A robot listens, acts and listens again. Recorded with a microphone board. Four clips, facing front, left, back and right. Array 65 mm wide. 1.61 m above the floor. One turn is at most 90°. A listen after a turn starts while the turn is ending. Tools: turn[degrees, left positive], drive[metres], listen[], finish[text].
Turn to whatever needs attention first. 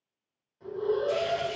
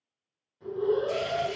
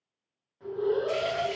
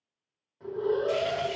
Thought: The alarm: 105° right.
Action: turn[-90]
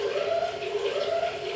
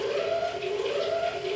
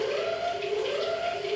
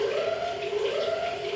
Thought: The alarm is now 60° right.
Action: turn[-60]
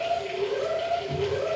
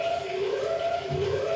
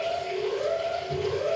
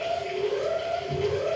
Action: finish[Facing the alarm.]